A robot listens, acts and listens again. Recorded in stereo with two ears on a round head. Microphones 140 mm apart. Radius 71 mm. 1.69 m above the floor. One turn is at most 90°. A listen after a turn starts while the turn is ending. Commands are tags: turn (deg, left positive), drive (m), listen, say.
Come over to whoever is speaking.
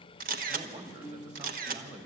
<turn deg="-45"/>
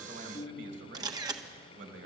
<turn deg="-90"/>
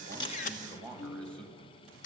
<drive m="1.0"/>
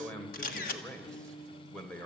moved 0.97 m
<drive m="1.0"/>
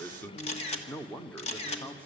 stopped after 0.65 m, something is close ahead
<turn deg="10"/>
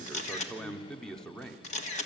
<say>Arrived at the man speaking, straight ahead.</say>